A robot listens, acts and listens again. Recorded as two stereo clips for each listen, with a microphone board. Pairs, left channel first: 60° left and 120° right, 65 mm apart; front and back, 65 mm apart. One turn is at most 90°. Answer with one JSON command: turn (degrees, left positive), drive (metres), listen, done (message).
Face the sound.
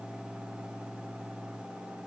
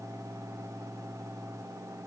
{"listen": true}
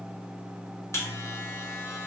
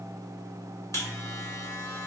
{"turn": 25}
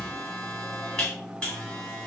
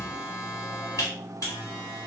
{"turn": -10}
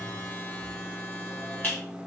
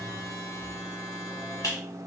{"done": "Found it: a buzzer, straight ahead, 1 to 2 m away."}